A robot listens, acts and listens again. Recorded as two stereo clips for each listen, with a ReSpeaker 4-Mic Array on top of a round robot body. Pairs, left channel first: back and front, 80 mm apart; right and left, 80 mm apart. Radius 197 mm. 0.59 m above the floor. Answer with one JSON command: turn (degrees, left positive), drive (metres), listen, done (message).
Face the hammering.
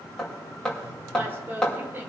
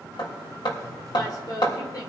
{"turn": -100}
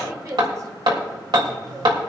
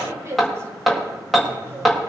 {"done": "Found it: hammering, straight ahead, 2 to 4 m away."}